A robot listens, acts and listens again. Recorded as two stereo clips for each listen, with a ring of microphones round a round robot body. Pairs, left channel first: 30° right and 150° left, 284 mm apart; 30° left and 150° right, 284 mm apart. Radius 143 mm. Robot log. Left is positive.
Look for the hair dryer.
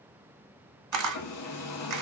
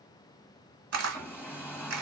note: The hair dryer: 55° right.
cmd yaw -55
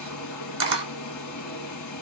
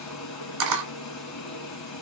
end: Found it: a hair dryer, straight ahead.